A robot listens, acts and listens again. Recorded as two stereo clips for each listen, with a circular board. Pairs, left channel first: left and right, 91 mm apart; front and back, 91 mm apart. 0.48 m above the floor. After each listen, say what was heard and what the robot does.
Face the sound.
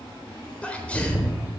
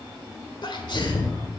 The sneeze: 15° left. Turn 15° left.
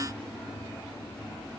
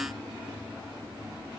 Facing where the sneeze came from. I can't hear it now.